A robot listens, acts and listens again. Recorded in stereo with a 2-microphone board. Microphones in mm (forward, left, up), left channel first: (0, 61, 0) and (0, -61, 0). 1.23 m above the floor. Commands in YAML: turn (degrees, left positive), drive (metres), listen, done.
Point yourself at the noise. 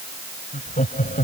turn: 90
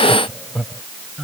done: "Found it: laughter, straight ahead."